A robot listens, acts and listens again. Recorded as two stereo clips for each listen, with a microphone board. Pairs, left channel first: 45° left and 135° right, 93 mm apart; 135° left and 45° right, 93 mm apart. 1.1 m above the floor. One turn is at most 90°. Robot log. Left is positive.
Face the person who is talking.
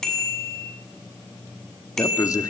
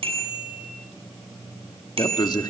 note: The man speaking: 95° left.
cmd yaw +90
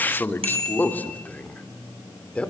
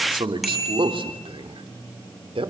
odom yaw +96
note: The man speaking is now 35° right.
cmd yaw -35
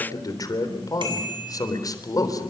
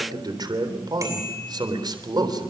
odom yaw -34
end: Facing the man speaking, 2 to 4 m away.